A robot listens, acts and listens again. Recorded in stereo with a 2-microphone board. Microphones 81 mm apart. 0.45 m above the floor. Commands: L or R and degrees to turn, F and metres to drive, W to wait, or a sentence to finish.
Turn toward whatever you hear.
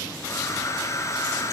L40
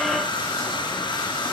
L100
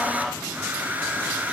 R20
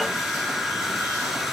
Facing the hair dryer.